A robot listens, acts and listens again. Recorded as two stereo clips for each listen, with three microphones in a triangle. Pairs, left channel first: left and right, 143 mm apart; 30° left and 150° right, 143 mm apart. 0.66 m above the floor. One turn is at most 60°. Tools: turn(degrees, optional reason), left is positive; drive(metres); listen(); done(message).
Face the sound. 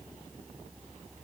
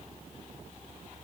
listen()
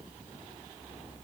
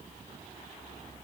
listen()
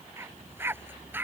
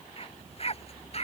turn(degrees=-15, reason="The dog barking: 15° right.")
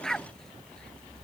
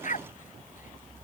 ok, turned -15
done("Facing the dog barking.")